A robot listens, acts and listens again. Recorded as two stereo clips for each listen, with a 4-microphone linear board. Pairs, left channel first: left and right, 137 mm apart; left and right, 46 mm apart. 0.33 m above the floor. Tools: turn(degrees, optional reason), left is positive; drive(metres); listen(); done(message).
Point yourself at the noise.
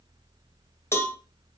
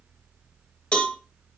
turn(degrees=20, reason="The cowbell: about 20° left or 160° left.")
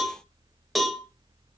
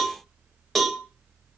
done("Facing the cowbell, 2 to 4 m away.")